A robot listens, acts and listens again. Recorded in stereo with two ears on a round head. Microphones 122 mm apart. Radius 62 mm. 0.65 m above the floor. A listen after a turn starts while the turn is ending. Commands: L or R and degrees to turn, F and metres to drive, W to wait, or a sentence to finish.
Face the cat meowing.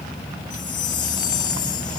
W
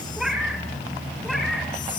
L30
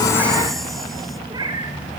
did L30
R30
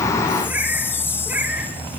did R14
R10
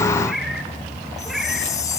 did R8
Found it: a cat meowing, straight ahead.